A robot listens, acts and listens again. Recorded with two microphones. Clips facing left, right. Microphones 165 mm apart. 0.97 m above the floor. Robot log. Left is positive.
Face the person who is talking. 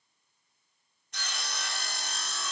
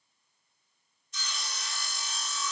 cmd idle
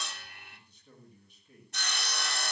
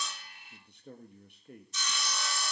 note: The man speaking: about 65° right or 115° right.
cmd yaw -65
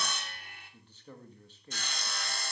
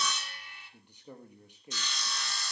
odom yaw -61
note: So it is at 15° right.
cmd yaw -15
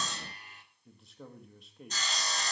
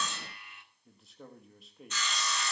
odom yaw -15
end: Found it: a man speaking, straight ahead, 1 to 2 m away.